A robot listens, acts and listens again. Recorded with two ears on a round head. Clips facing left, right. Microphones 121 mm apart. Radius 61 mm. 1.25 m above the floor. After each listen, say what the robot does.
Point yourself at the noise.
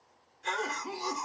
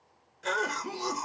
Turn 60° right.
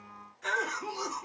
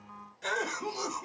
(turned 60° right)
Turn 40° right.
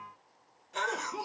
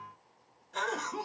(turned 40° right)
Turn 10° left.
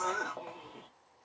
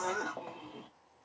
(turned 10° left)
Facing the cough, 1 to 2 m away.